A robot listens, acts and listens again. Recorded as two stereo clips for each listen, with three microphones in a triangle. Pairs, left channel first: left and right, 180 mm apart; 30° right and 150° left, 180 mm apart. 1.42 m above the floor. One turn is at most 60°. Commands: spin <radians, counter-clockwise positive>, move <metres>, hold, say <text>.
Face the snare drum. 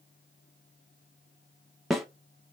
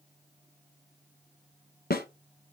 say Facing the snare drum.